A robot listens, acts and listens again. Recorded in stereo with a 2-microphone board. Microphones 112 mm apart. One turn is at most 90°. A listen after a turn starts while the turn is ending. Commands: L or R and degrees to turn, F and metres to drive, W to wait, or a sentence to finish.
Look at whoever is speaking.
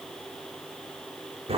W
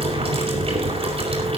W
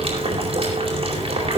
I can't make out anyone speaking to turn to.